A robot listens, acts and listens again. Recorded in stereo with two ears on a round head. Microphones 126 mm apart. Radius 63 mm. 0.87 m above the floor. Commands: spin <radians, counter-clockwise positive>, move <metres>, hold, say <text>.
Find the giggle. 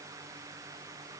hold
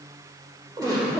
spin -0.44
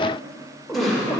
say Found it: a giggle, straight ahead.